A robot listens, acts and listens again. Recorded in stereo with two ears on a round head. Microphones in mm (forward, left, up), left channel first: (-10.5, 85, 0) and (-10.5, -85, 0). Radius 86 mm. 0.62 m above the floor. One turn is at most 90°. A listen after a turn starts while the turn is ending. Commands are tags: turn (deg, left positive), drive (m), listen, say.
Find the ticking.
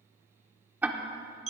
<turn deg="-30"/>
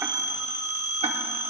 <listen/>
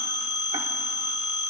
<listen/>
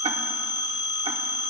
<say>I heard ticking, but can't make it out now. It was about 20° left or 140° right.</say>